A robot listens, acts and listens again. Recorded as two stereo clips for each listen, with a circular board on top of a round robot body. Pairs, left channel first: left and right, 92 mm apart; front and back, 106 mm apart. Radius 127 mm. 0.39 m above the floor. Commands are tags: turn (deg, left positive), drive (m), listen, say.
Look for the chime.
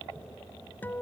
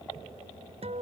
<listen/>
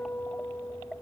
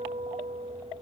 <listen/>
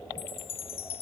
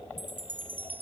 <turn deg="105"/>
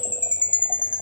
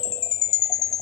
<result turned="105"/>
<turn deg="20"/>
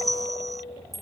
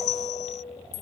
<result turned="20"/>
<say>Facing the chime.</say>